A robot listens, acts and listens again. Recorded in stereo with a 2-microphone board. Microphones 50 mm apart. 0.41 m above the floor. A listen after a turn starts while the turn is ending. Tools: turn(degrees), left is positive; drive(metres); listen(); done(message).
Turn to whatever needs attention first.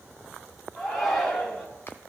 turn(degrees=30)
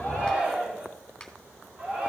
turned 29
turn(degrees=-25)
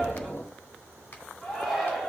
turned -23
done("Facing the shout.")